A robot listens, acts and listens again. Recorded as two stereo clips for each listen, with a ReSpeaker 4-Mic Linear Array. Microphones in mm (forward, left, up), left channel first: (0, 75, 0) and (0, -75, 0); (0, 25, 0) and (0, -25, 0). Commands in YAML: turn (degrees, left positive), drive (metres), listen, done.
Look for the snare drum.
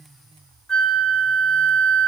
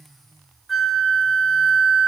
listen: true
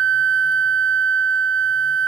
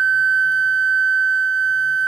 listen: true
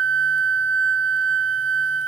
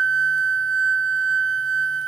done: "I can't make out a snare drum, only a flute."